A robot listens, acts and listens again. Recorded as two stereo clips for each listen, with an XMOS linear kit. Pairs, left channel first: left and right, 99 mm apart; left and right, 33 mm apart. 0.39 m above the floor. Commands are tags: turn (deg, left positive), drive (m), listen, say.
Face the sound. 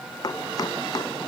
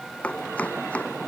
<turn deg="40"/>
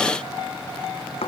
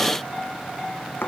<turn deg="100"/>
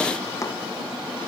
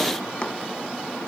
<turn deg="35"/>
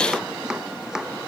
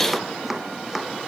<say>Facing the chopping.</say>